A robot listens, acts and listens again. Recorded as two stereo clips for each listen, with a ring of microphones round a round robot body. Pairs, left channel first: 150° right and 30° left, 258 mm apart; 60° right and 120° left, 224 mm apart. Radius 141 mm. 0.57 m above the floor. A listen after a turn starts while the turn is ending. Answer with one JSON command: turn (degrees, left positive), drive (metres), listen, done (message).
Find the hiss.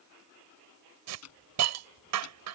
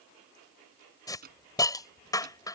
{"turn": 15}
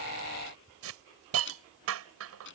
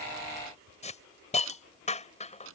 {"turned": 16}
{"done": "Found it: a hiss, straight ahead."}